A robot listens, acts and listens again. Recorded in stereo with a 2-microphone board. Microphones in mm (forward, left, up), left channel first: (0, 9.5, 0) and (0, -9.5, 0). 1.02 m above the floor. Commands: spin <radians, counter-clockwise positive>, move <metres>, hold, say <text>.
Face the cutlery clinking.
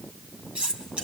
spin -1.57
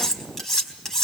spin 0.26
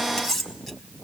say Found it: cutlery clinking, straight ahead, over 4 m away.